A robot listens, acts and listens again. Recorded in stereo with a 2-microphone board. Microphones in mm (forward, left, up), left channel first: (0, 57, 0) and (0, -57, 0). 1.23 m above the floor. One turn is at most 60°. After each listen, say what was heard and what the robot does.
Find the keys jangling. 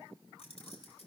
The keys jangling: about 65° left or 115° left. Turn 60° left.
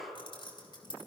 So it is at 45° left. Turn 45° left.
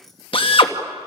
Facing the keys jangling, over 4 m away.